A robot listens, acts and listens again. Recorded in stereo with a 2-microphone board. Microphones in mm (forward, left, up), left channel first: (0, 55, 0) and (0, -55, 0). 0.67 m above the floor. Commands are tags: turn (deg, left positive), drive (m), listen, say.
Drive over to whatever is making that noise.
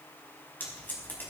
<turn deg="20"/>
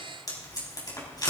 <turn deg="145"/>
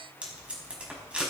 <turn deg="-10"/>
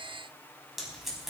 <drive m="1.0"/>
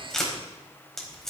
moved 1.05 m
<drive m="1.0"/>
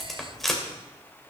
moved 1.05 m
<drive m="1.0"/>
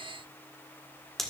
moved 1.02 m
<drive m="1.0"/>
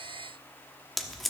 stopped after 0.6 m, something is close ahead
<say>Arrived at the tape being pulled, straight ahead.</say>